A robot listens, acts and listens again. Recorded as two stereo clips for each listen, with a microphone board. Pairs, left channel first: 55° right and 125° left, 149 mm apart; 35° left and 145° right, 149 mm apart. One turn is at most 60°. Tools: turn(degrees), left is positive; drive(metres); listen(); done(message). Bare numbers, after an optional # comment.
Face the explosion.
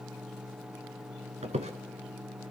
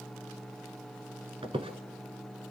listen()
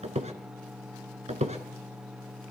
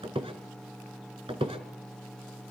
listen()
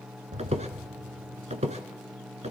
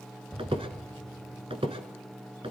# The explosion: 120° left.
turn(60)
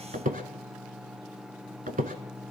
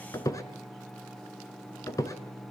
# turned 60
# Nothing new. It was at 60° left.
turn(60)
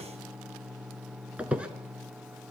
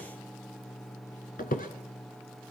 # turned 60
done("Facing where the explosion came from. I can't hear it now.")